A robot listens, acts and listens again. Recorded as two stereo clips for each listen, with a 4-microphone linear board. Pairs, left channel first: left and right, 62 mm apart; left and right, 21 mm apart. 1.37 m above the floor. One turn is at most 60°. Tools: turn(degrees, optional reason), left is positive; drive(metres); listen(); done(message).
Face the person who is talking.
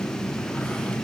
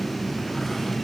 listen()
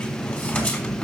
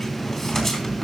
listen()
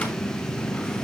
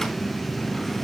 done("I can't make out anyone speaking to turn to.")